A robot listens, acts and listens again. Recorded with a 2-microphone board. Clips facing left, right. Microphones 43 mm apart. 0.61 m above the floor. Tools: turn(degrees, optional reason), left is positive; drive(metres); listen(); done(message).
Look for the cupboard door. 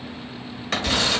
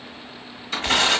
turn(degrees=75, reason="The cupboard door: about 75° left or 105° left.")
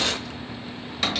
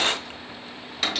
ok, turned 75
done("Facing the cupboard door, 1 to 2 m away.")